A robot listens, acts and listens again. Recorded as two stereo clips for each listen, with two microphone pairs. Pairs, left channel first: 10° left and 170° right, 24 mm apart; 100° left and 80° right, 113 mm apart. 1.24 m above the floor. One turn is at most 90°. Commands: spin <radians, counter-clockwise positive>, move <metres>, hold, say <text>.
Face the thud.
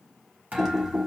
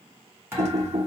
spin -1.57
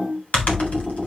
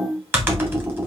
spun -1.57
spin -1.05
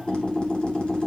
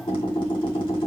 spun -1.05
say Facing where the thud came from. I can't hear it now.